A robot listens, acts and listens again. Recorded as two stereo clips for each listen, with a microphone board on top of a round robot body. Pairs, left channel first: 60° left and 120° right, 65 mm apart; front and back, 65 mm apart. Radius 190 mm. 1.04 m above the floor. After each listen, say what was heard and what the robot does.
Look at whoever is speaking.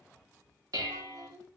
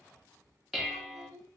The child speaking: 145° right. Turn 145° right.
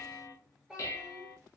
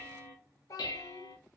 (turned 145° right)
The child speaking is now 35° right. Turn 35° right.
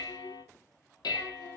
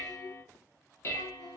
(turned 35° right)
Keep listening.
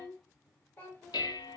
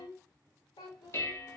Found it: a child speaking, straight ahead, under 1 m away.